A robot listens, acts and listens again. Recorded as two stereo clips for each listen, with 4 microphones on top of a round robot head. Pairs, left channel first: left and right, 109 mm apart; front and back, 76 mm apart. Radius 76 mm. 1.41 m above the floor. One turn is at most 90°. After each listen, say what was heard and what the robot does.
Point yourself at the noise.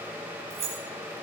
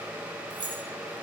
The keys jangling: 135° right. Turn 90° right.
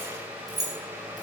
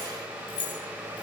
The keys jangling is now 35° right. Turn 35° right.
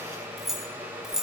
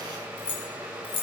Facing the keys jangling, over 4 m away.